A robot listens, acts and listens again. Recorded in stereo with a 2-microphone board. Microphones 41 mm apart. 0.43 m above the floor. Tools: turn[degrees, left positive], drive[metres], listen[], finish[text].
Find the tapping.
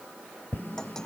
Thought: The tapping: about 50° left or 130° left.
Action: turn[50]
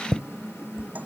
Thought: So it is at 80° left.
Action: turn[80]
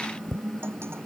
Thought: The tapping is now 10° left.
Action: turn[10]
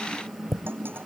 Action: finish[Facing the tapping.]